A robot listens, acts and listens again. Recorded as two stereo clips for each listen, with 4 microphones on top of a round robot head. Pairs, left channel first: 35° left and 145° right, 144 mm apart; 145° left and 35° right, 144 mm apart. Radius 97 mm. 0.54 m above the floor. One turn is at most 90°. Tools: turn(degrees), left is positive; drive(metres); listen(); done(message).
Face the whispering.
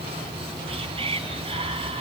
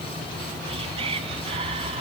turn(degrees=-90)
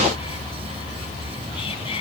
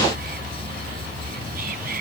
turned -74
turn(degrees=-15)
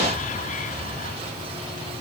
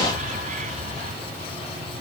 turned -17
done("Facing the whispering.")